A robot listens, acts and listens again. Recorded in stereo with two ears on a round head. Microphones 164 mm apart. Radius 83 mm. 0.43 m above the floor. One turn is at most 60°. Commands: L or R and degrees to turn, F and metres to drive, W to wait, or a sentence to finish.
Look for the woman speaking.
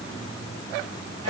W
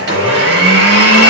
W
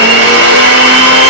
I can't make out a woman speaking to turn to.